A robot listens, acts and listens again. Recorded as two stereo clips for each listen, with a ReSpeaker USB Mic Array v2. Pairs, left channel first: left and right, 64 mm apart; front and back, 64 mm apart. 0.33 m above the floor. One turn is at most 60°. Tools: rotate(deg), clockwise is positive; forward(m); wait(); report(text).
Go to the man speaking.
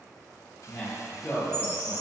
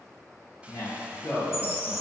rotate(-10)
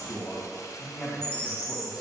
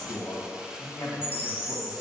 forward(1.0)
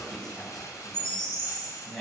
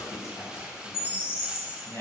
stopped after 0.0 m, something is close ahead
report("Blocked. The man speaking is further on, straight ahead.")